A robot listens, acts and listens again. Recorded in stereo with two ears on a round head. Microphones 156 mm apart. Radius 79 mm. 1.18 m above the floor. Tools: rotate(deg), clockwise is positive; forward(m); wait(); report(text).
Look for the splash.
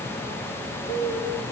wait()
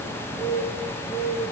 wait()
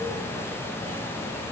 report("I can't make out a splash to turn to.")